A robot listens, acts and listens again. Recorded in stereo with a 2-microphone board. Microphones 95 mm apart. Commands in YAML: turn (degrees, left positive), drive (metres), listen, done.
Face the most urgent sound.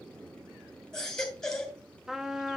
turn: 30
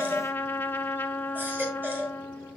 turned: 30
turn: -25
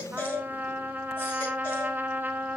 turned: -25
turn: 25
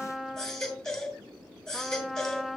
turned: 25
done: "Facing the baby crying, 2 to 4 m away."